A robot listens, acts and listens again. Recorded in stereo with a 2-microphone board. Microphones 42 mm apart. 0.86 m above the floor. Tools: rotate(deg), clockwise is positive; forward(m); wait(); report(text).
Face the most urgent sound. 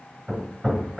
wait()
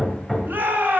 rotate(55)
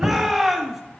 rotate(10)
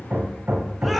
report("Found it: a shout, straight ahead, 1 to 2 m away.")